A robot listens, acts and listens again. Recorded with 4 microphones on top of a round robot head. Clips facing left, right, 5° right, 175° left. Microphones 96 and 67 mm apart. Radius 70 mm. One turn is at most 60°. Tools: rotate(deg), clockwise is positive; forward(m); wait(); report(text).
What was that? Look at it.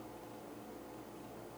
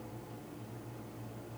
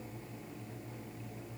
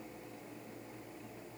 wait()
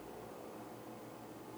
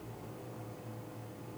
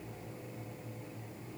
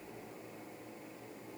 wait()
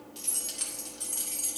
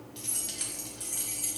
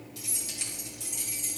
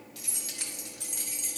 rotate(-60)
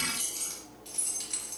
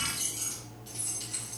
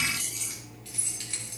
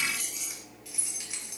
rotate(-60)
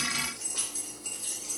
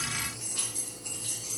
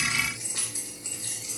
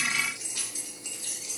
rotate(-45)
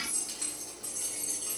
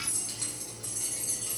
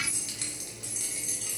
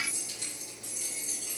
report("Facing the keys jangling.")